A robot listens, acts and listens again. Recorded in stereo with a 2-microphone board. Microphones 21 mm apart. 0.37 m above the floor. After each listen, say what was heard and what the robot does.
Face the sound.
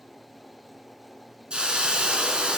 The hiss: about 50° right or 130° right. Turn 50° right.
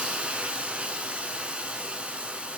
So it is at 80° right. Turn 80° right.
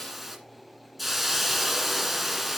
Found it: a hiss, straight ahead.